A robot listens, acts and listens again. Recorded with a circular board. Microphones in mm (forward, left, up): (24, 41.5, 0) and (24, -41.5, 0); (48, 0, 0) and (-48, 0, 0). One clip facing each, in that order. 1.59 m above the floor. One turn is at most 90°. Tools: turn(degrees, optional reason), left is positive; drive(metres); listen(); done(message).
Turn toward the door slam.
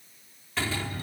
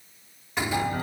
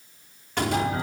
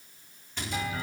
turn(degrees=-15, reason="The door slam: 15° right.")
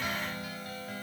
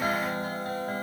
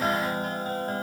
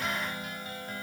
done("Facing where the door slam came from. I can't hear it now.")